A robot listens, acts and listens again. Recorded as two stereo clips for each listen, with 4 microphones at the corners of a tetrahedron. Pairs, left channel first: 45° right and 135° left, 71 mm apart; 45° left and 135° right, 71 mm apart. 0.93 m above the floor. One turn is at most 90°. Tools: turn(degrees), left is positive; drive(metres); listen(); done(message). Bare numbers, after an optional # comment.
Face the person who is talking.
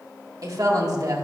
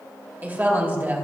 # The woman speaking: 165° left.
turn(90)
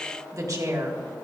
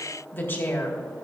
# The woman speaking is now 105° left.
turn(90)
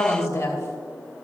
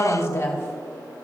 done("Facing the woman speaking, 2 to 4 m away.")